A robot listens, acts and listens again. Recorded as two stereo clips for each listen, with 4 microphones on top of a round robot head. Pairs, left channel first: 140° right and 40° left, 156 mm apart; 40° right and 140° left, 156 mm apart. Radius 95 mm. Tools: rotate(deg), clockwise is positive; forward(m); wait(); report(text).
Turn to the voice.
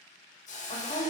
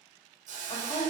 rotate(95)
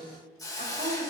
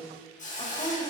rotate(-10)
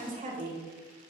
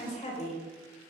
report("Facing the woman speaking.")